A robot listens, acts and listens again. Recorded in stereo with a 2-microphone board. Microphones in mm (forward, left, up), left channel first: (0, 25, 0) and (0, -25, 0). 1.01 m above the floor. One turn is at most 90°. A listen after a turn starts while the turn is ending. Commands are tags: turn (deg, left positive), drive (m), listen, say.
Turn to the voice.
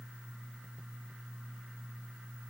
<listen/>
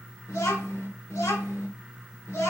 <turn deg="65"/>
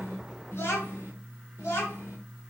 <turn deg="70"/>
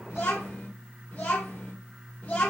<turn deg="35"/>
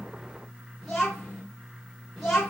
<say>Facing the child speaking, 2 to 4 m away.</say>